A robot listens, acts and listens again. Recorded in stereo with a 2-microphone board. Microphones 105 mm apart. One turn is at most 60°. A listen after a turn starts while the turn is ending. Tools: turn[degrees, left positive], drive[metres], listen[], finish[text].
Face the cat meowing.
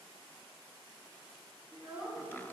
Action: listen[]
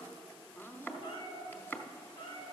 Thought: The cat meowing: about 45° left or 135° left.
Action: turn[45]
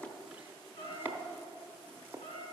Thought: So it is at 95° left.
Action: turn[60]
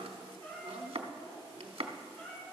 Thought: The cat meowing is now 10° left.
Action: turn[10]
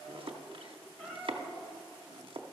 Action: finish[Found it: a cat meowing, straight ahead.]